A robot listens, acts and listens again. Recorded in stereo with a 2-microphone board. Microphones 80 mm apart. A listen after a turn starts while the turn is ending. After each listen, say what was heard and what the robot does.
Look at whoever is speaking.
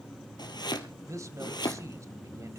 The man speaking: about 40° right or 140° right. Turn 40° right.
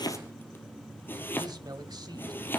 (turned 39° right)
So it is at 95° right. Turn 95° right.
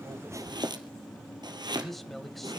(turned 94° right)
Facing the man speaking.